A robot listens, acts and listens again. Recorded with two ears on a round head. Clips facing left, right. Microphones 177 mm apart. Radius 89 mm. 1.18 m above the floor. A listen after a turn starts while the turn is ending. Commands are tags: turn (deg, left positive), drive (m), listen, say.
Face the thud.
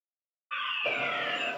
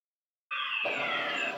<listen/>
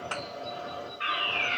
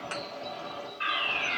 <turn deg="-25"/>
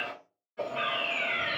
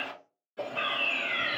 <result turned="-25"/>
<listen/>
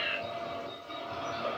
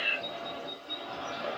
<say>I heard a thud, but can't make it out now. It was about straight ahead or 130° right.</say>